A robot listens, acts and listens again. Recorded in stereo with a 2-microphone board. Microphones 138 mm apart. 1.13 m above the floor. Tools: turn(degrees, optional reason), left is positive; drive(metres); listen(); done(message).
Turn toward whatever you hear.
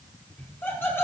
turn(degrees=15, reason="The laughter: about 15° left or 165° left.")
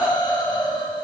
turn(degrees=150, reason="So it is at 150° left.")
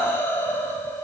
turn(degrees=20, reason="The laughter is now 20° left.")
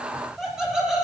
done("Found it: laughter, straight ahead.")